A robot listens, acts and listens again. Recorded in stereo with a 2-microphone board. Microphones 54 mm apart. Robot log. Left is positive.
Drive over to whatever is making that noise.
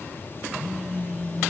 cmd yaw +30
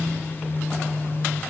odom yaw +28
note: So it is at 145° left.
cmd yaw +145
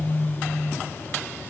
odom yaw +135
note: The phone buzzing is now 10° left.
cmd yaw +10
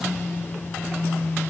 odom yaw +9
cmd fwd 1.0
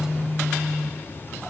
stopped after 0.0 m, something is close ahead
end: Blocked. The phone buzzing is further on, straight ahead.